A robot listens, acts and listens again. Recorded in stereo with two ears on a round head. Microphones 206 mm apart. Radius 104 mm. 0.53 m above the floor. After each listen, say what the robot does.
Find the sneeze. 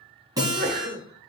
Turn 45° right.
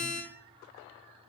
Keep listening.
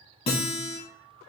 I heard a sneeze, but can't make it out now. It was about straight ahead or 90° right.